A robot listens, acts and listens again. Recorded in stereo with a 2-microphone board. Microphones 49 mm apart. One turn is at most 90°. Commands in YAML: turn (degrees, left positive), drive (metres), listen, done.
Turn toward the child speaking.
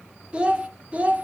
turn: -30
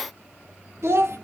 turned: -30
turn: -90
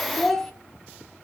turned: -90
done: "Found it: a child speaking, straight ahead, 1 to 2 m away."